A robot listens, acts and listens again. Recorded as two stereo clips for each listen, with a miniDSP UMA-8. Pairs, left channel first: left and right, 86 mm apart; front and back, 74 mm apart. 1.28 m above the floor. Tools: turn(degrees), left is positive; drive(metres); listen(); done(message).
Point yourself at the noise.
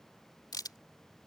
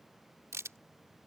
turn(degrees=130)
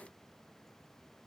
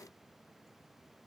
done("I heard a crack from this way, but can't make it out now.")